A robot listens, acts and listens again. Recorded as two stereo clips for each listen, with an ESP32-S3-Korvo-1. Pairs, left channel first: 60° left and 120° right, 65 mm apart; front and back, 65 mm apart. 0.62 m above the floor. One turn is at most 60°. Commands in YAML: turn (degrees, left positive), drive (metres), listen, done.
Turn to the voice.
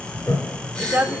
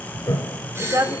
turn: 60
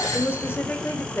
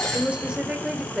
turn: 60
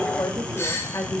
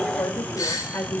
turn: 35
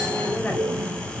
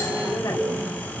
listen: true
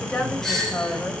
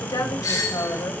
turn: -10
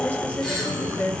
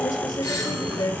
done: "Found it: a woman speaking, straight ahead, 2 to 4 m away."